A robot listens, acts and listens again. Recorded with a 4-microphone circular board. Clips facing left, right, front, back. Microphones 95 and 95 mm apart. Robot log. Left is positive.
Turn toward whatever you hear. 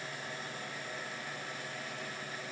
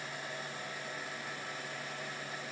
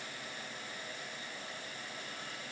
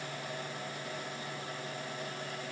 cmd idle
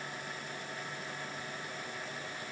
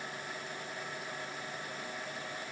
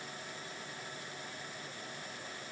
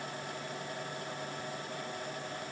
cmd idle
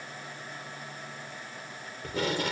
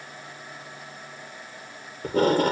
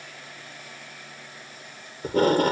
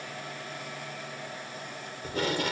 note: The tape being pulled: 45° right.
cmd yaw -45
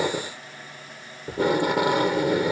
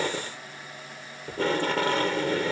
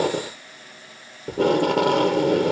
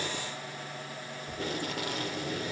note: The tape being pulled is now 15° left.
cmd yaw +15
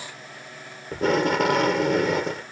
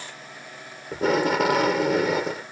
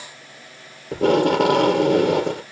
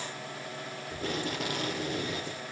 end: Facing the tape being pulled.